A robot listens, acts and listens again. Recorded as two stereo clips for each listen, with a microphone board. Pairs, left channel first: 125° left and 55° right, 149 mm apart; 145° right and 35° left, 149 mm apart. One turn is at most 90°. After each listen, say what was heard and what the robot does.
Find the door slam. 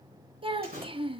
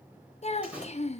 The door slam: 50° right. Turn 50° right.
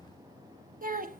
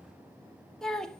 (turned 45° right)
Facing where the door slam came from. I can't hear it now.